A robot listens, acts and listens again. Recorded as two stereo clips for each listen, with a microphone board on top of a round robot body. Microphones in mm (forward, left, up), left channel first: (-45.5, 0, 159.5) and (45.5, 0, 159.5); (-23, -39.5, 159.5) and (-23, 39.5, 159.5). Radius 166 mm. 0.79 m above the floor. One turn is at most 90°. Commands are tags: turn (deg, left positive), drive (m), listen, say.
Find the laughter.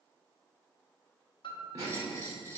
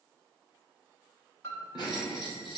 <turn deg="-55"/>
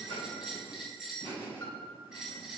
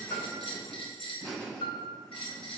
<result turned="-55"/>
<turn deg="-15"/>
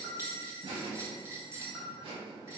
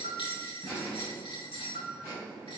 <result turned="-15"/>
<turn deg="10"/>
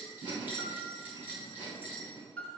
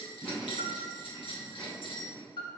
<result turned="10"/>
<say>Facing the laughter, over 4 m away.</say>